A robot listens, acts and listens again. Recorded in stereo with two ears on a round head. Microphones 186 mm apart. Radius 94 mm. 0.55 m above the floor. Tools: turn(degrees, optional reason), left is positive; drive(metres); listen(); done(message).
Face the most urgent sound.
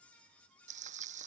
listen()
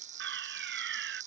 turn(degrees=-60, reason="The fire alarm: about 60° right or 120° right.")
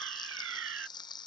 turn(degrees=-65, reason="So it is at 65° right.")
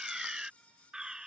done("Facing the fire alarm.")